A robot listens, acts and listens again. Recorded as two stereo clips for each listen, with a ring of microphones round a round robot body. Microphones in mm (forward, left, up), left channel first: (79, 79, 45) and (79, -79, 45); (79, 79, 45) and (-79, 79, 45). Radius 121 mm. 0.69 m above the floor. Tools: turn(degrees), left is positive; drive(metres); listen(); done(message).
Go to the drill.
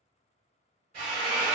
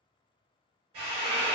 turn(degrees=-130)
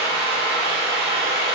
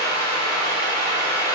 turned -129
drive(metres=1.0)
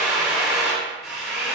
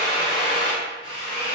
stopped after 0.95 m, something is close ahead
done("Arrived at the drill, straight ahead.")